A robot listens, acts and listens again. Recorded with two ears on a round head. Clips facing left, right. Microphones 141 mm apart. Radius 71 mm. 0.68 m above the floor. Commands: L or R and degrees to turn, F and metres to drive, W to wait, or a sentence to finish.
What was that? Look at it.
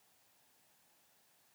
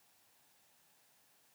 W
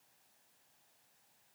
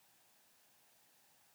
W
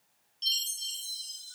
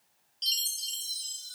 R25
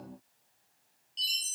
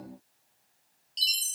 R130
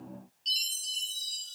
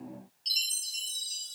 Facing the chime.